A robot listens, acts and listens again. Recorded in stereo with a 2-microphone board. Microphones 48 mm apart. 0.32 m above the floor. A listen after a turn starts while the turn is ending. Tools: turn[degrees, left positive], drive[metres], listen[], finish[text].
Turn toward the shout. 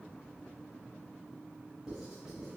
Action: listen[]
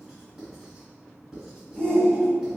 Thought: The shout: about 25° left or 155° left.
Action: turn[25]
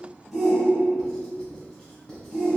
Action: finish[Found it: a shout, straight ahead.]